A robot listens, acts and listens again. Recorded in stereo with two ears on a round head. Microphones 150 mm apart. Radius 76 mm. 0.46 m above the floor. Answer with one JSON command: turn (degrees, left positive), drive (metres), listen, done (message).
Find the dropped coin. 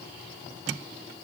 {"listen": true}
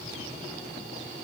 {"listen": true}
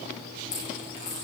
{"turn": 45}
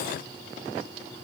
{"listen": true}
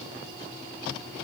{"done": "I heard a dropped coin, but can't make it out now. It was about straight ahead or 90° left."}